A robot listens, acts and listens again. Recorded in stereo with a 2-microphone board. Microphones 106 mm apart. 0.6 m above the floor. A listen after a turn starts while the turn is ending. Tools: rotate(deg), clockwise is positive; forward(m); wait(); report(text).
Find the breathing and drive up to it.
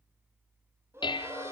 rotate(25)
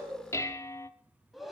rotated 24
forward(1.0)
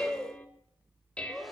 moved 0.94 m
forward(1.0)
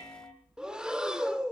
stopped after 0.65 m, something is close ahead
rotate(10)
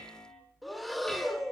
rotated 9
report("I am next to the breathing.")